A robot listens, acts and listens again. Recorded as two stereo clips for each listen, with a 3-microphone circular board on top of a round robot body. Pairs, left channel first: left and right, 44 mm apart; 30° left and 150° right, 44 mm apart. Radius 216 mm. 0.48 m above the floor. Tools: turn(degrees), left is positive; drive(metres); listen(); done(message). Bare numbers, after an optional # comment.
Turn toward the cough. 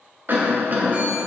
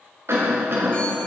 # The cough: 135° right.
turn(-135)
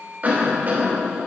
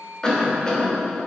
# The cough is now 40° right.
turn(-40)
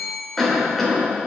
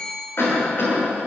done("Facing the cough.")